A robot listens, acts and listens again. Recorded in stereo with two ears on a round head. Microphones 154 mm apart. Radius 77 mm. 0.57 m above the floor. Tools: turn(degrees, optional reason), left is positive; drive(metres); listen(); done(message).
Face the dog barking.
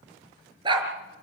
turn(degrees=-25, reason="The dog barking: about 25° right or 155° right.")
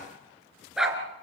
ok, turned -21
done("Found it: a dog barking, straight ahead, 2 to 4 m away.")